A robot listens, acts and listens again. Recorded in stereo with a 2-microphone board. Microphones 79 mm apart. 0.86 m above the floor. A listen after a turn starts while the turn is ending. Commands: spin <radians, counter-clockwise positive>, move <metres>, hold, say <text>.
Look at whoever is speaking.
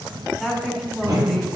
spin -0.52
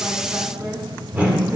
hold
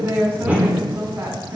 spin -2.53
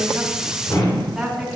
say Found it: a woman speaking, straight ahead, 2 to 4 m away.